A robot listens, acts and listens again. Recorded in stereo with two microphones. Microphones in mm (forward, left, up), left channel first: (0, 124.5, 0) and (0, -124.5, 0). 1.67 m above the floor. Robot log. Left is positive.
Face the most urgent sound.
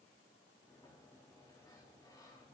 cmd idle
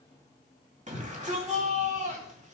note: The shout: about 30° right or 150° right.
cmd yaw -30
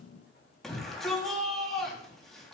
end: Facing the shout, 2 to 4 m away.